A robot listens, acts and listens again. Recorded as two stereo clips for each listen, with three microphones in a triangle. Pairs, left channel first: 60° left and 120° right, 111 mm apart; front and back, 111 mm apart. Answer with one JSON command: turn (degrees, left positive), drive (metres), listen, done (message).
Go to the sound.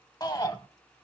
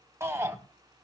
{"turn": 115}
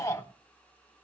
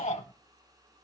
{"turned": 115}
{"drive": 1.0}
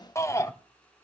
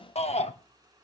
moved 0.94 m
{"drive": 1.0}
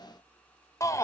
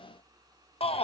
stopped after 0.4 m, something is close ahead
{"done": "I am next to the shout."}